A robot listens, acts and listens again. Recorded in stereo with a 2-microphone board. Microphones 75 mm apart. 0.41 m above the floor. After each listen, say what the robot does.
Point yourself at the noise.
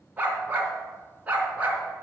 Turn 20° right.
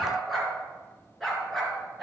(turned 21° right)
Found it: a dog barking, straight ahead.